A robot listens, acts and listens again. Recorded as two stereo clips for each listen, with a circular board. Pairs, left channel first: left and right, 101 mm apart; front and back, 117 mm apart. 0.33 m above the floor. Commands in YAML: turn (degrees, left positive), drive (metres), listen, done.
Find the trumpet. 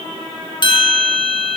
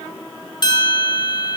listen: true
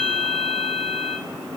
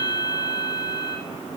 listen: true
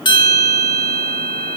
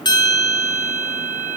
done: "I can't make out a trumpet to turn to."